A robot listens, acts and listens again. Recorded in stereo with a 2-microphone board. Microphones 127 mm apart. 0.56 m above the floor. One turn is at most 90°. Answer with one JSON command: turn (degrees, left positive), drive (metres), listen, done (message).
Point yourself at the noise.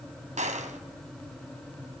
{"turn": -70}
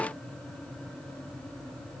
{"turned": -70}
{"listen": true}
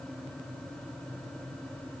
{"done": "I heard a gunshot, but can't make it out now. It was about straight ahead or 40° right."}